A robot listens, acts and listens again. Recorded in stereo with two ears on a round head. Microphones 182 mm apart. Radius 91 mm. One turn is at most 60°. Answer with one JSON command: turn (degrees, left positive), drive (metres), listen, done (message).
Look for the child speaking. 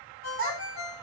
{"turn": -50}
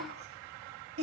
{"turn": -60}
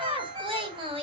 {"turn": -25}
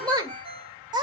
{"turn": -20}
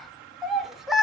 {"done": "Found it: a child speaking, straight ahead, 1 to 2 m away."}